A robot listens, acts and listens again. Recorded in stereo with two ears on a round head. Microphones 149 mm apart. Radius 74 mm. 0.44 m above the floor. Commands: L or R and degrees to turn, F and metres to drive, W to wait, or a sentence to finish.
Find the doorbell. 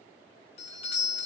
L35
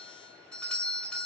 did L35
Facing the doorbell, 2 to 4 m away.